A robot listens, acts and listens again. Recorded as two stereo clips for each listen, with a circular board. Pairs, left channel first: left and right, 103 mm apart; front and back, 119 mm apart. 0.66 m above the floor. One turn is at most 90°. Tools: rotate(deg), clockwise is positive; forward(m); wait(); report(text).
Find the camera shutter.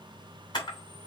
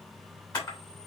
rotate(-50)
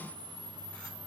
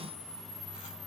rotate(-15)
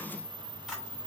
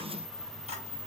report("Facing the camera shutter.")